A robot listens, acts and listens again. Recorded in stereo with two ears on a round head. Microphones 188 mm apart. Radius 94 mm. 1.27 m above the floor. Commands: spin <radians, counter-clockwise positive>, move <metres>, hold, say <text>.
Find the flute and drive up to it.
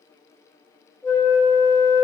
spin 0.52
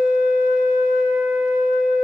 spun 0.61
spin 2.36
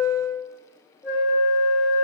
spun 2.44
move 1.0
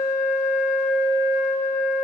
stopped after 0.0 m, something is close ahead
say Something is in my way. I am facing the flute but have not reached it.